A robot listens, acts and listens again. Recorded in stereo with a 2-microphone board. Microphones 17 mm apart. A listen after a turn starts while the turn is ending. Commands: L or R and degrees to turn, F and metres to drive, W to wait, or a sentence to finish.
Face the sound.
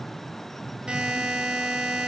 R65
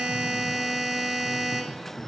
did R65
R30
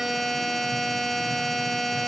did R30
Facing the buzzer, under 1 m away.